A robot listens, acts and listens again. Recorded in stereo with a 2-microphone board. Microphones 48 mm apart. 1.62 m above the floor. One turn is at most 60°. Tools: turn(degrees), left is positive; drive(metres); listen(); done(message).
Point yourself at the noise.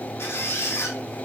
turn(degrees=60)
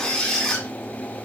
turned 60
turn(degrees=15)
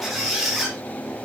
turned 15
done("Facing the squeak.")